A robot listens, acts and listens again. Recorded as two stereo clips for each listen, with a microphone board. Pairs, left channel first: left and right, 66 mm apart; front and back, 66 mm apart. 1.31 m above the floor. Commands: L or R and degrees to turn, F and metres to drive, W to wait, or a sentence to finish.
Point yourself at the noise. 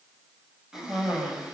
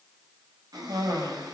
R170
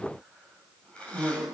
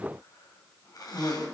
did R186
L15
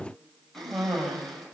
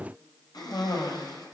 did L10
Facing the cough, over 4 m away.